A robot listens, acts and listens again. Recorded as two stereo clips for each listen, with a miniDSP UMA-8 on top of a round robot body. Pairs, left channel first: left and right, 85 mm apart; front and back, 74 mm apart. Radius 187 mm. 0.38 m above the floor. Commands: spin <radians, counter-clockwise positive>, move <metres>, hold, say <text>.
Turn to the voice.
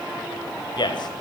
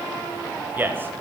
spin 2.09
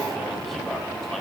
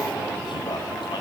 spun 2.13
hold
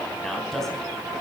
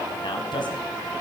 say Found it: a man speaking, straight ahead, 2 to 4 m away.